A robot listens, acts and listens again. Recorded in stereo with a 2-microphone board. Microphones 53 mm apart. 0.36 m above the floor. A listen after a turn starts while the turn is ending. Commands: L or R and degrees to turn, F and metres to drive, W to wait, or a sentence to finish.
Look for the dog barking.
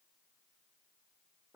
W
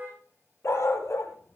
L60
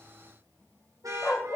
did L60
L25
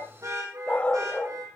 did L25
L30
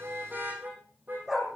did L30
R10
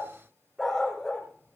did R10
Found it: a dog barking, straight ahead.